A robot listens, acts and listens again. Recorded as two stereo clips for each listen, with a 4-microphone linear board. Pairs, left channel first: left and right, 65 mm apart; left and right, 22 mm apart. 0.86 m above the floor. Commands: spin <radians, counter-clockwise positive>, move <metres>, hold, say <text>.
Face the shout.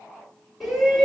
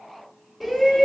spin 0.52
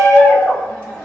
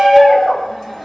spin 2.62
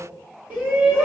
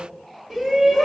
spin -0.44
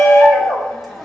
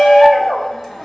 say Facing the shout, 1 to 2 m away.